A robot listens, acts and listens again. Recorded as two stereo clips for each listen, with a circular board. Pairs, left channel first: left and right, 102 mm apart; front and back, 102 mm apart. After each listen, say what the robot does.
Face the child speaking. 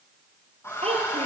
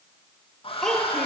Turn 90° right.
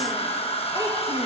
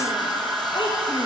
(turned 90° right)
Turn 35° right.
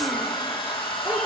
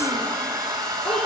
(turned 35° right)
Keep listening.
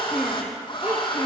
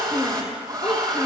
Turn 25° right.
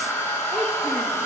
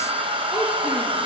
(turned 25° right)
Keep listening.
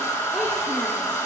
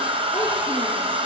Keep listening.
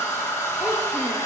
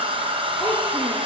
Facing where the child speaking came from. I can't hear it now.